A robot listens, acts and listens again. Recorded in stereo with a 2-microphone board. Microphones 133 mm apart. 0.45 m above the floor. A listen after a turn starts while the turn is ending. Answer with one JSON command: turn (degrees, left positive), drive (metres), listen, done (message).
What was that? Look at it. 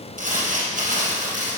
{"turn": -90}
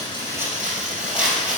{"turn": -10}
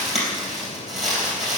{"done": "Facing the crumpling."}